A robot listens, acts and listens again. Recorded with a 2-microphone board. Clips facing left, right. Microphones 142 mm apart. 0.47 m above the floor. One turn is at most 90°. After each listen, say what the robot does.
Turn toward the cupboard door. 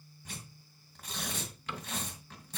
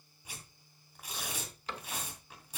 Turn 35° right.
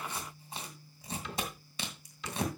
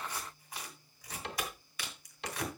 Turn 90° right.
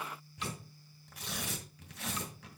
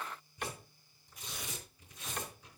Turn 55° right.
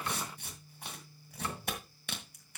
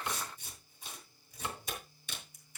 Turn 20° right.
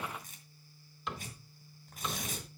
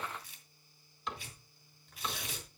Facing the cupboard door, 1 to 2 m away.